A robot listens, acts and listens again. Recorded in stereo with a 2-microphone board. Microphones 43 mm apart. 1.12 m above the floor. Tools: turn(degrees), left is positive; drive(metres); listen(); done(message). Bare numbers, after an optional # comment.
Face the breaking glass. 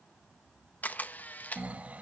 listen()
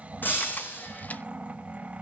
# The breaking glass: about 50° left or 130° left.
turn(50)
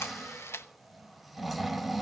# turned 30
listen()
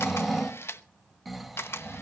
done("I heard breaking glass, but can't make it out now. It was about 20° left or 100° left.")